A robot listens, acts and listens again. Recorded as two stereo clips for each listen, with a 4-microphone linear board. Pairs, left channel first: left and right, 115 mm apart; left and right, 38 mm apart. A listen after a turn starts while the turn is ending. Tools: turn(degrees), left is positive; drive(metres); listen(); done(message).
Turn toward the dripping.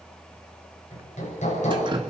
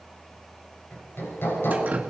turn(degrees=-40)
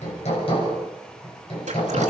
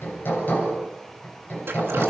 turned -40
listen()
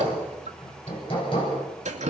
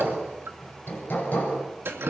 turn(degrees=-105)
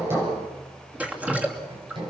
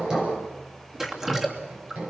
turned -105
turn(degrees=-10)
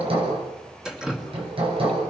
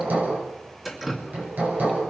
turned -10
done("Facing the dripping.")